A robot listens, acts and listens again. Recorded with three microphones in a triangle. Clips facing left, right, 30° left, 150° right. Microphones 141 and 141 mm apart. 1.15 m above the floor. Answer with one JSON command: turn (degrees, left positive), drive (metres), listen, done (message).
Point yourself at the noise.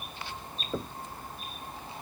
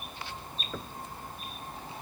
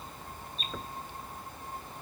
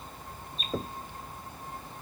{"turn": 155}
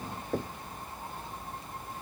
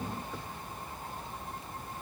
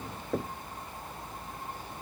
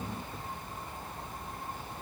{"turn": 50}
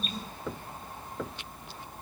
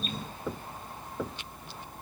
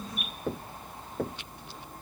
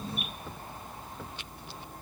{"done": "Found it: knocking, straight ahead."}